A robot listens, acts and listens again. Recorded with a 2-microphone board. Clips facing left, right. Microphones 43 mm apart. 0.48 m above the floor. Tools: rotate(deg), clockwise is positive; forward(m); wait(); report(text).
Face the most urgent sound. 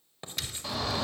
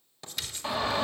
rotate(30)
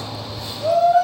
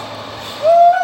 rotate(115)
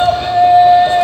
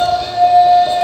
rotate(-35)
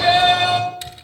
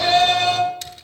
rotate(-15)
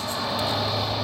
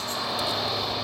report("Found it: a shout, straight ahead.")